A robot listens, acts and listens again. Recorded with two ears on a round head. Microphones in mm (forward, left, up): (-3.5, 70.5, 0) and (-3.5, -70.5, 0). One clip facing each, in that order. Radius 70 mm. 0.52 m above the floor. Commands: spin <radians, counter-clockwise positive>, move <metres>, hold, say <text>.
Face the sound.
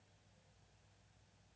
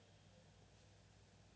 hold
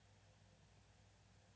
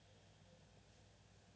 hold
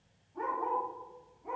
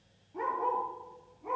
spin -1.57
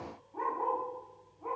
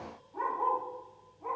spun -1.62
say Found it: a dog barking, straight ahead.